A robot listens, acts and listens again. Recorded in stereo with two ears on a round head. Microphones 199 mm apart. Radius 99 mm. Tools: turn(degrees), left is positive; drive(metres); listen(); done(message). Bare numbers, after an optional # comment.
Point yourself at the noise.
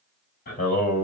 # The singing: about 40° left or 140° left.
turn(40)
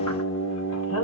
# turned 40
# So it is at 110° left.
turn(110)
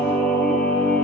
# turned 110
# The singing is now 10° left.
turn(10)
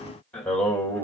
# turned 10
# The singing is now 10° left.
turn(10)
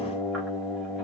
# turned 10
done("Facing the singing.")